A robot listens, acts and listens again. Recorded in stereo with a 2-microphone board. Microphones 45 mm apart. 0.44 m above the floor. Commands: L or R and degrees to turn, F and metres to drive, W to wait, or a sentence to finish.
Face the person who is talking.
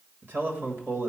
R60
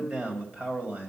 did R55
R30
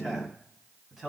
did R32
R10
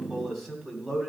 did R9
Found it: a man speaking, straight ahead.